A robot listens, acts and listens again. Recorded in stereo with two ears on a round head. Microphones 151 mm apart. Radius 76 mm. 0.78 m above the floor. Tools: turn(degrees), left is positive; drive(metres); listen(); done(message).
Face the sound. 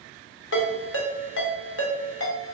turn(degrees=90)
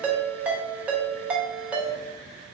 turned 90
turn(degrees=-10)
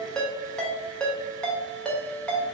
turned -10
done("Facing the ringtone.")